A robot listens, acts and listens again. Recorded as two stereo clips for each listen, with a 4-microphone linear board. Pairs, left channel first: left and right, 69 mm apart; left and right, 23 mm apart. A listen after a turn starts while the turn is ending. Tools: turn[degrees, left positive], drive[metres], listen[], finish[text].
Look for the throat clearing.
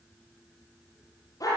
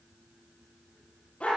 Action: listen[]
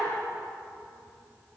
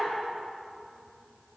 Action: listen[]
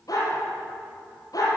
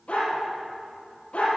Action: finish[I can't make out throat clearing to turn to.]